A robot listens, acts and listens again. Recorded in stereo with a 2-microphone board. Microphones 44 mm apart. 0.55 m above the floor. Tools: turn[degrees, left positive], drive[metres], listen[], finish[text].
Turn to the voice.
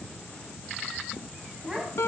Thought: The child speaking: about 15° right or 165° right.
Action: turn[-15]
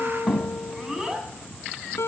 Action: turn[-30]
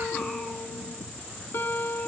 Action: listen[]
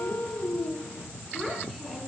Action: finish[Found it: a child speaking, straight ahead.]